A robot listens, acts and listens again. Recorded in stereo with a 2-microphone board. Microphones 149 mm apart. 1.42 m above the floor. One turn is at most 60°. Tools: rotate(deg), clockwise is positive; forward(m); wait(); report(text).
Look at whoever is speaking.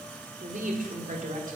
rotate(60)
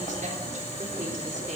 wait()
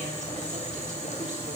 wait()
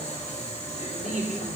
rotate(55)
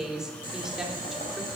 report("Found it: a woman speaking, straight ahead, 2 to 4 m away.")